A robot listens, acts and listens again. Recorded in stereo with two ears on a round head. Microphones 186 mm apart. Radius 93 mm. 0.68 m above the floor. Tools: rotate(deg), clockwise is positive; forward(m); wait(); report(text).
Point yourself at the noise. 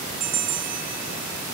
rotate(45)
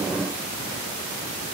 wait()
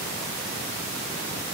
wait()
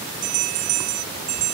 rotate(90)
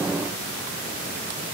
wait()
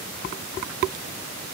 wait()
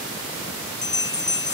rotate(-20)
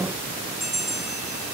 report("Facing the bell.")